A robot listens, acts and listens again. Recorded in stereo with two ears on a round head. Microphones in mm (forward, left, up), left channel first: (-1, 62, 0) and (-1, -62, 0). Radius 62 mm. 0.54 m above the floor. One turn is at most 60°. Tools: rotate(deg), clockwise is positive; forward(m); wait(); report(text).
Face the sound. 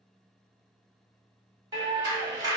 rotate(25)
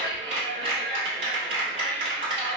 rotate(60)
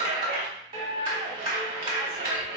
rotate(55)
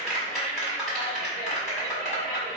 report("Found it: a clap, straight ahead, 1 to 2 m away.")